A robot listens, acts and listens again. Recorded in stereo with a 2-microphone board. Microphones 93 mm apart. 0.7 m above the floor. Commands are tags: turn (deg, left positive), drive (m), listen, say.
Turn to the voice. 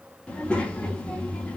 <turn deg="30"/>
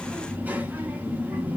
<turn deg="-20"/>
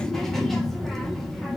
<say>Facing the child speaking, under 1 m away.</say>